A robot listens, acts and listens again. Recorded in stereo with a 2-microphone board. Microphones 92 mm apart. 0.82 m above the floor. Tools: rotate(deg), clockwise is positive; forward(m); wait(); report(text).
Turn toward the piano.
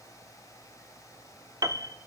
rotate(40)
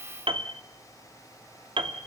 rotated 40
rotate(100)
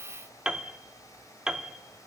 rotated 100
rotate(10)
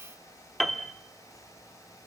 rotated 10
report("Facing the piano, 1 to 2 m away.")